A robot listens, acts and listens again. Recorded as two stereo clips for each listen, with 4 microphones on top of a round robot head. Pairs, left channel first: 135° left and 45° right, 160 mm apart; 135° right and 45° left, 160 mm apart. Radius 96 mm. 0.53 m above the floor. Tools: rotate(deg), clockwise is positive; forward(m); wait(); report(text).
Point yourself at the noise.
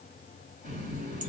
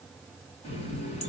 rotate(90)
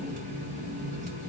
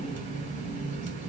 report("Facing the running tap.")